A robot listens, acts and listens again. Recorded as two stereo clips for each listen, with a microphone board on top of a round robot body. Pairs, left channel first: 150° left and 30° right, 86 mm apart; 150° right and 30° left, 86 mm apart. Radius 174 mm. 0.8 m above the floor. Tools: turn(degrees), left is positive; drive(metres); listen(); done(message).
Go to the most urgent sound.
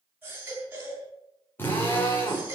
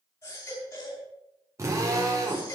turn(degrees=-100)
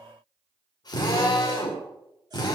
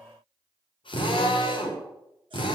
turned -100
listen()
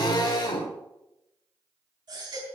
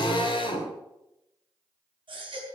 drive(metres=1.0)
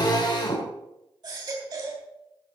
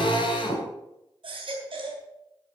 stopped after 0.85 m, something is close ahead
turn(degrees=10)
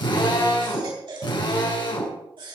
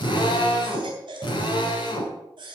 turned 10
done("Something is in my way. I am facing the baby crying but have not reached it.")